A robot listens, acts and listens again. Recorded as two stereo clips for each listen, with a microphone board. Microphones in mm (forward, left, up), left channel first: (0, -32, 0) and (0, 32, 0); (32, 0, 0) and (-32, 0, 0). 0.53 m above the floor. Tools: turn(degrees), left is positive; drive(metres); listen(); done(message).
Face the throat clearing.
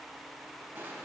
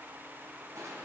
listen()
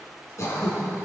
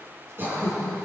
turn(degrees=-125)
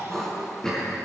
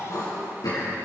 turn(degrees=-10)
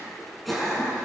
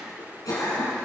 done("Found it: throat clearing, straight ahead, over 4 m away.")